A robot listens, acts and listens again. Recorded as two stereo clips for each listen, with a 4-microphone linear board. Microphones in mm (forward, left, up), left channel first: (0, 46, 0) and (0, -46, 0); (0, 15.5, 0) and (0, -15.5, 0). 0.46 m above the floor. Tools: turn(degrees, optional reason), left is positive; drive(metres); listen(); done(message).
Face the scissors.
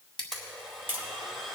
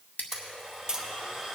turn(degrees=90)
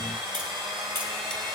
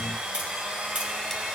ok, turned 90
listen()
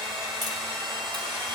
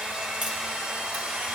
listen()
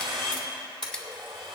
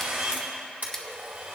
done("Facing where the scissors came from. I can't hear it now.")